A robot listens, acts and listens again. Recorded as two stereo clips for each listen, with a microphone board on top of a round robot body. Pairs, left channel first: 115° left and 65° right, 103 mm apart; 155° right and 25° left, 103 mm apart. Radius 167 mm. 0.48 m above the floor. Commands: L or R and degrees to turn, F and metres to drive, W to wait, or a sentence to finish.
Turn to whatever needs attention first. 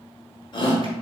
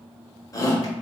L150
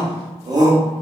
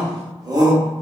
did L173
R20
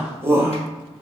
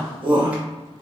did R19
Facing the shout, 1 to 2 m away.